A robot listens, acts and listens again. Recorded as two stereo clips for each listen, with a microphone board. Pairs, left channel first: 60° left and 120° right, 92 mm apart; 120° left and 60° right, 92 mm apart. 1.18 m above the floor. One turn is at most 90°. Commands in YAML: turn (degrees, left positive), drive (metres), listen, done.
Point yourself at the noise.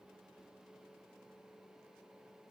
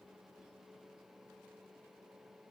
listen: true
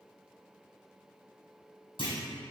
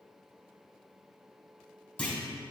turn: 45
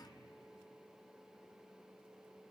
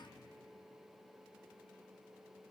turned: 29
turn: 15
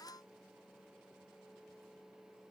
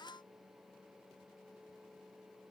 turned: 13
done: "Facing where the clunk came from. I can't hear it now."